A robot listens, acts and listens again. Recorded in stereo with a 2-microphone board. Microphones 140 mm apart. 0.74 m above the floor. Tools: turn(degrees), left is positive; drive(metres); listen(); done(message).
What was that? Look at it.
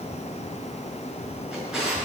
turn(degrees=-30)
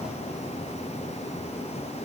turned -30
listen()
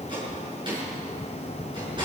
turn(degrees=-145)
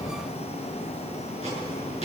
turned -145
listen()
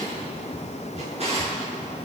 turn(degrees=-45)
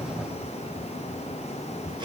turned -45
listen()
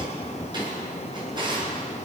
turn(degrees=-30)
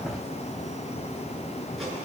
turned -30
listen()
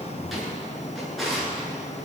done("Facing the drawer.")